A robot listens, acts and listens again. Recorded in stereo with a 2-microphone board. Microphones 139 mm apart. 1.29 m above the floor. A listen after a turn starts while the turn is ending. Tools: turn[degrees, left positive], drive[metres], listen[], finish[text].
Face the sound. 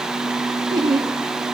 Thought: The laughter: about 30° right or 150° right.
Action: turn[-30]
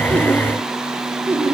Thought: So it is at 15° right.
Action: turn[-15]
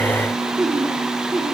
Action: finish[Facing the laughter.]